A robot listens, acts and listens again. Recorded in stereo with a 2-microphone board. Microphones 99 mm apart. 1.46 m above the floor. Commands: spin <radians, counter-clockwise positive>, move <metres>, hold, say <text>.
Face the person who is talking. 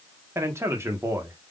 spin -0.44
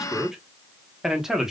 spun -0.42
say Facing the man speaking, 1 to 2 m away.